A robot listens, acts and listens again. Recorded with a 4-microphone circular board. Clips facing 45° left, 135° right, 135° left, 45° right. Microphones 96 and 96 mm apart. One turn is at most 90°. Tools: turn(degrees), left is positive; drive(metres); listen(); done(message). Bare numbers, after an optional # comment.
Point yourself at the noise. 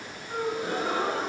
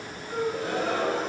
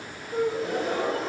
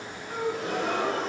# The gasp: 25° right.
turn(-25)
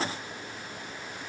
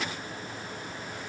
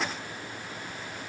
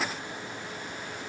done("Facing where the gasp came from. I can't hear it now.")